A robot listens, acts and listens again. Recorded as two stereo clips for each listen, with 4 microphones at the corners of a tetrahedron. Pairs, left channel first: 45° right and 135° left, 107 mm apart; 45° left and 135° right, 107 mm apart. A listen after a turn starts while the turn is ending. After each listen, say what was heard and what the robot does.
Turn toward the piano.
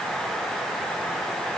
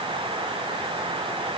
Keep listening.
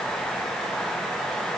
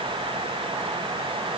Keep listening.
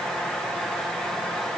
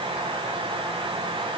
I can't make out a piano to turn to.